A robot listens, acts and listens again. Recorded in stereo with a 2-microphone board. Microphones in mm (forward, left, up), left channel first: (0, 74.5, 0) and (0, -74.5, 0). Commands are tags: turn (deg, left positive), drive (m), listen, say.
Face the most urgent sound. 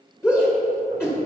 <turn deg="15"/>
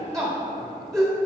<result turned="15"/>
<say>Facing the shout, 1 to 2 m away.</say>